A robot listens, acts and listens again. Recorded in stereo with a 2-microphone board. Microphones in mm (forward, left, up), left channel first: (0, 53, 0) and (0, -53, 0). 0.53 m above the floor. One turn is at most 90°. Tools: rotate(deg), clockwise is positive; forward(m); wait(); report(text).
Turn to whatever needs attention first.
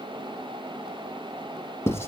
wait()
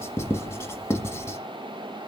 wait()
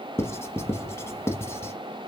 report("I can't make out anything urgent, only writing.")